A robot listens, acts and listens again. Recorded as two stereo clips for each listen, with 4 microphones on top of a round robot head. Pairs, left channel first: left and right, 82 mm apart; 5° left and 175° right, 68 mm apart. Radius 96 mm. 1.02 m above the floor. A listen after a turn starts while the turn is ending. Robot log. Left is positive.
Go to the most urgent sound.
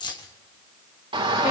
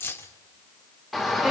note: The shout: 85° right.
cmd yaw -85
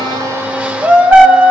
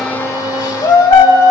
note: The shout is now 20° right.
cmd yaw -20
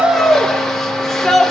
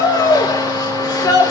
cmd fwd 1.0
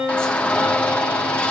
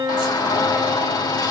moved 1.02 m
note: The shout is now 15° left.
cmd yaw +15
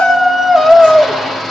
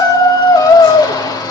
cmd fwd 1.0
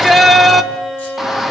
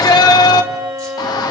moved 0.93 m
cmd fwd 1.0
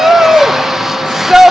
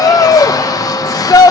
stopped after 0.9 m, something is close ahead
end: Arrived at the shout, straight ahead.